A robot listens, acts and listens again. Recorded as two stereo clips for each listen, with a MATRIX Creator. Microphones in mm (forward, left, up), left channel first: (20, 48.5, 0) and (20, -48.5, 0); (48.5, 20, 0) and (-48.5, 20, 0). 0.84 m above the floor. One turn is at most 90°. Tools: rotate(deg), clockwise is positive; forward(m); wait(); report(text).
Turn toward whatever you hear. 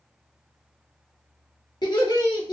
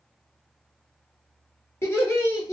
rotate(-50)
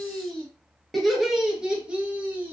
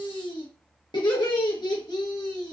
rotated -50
rotate(25)
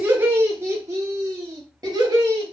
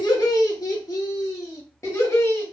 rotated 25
rotate(55)
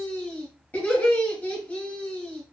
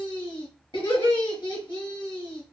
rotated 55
rotate(-20)
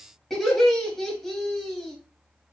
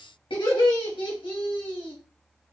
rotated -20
report("Found it: laughter, straight ahead, 1 to 2 m away.")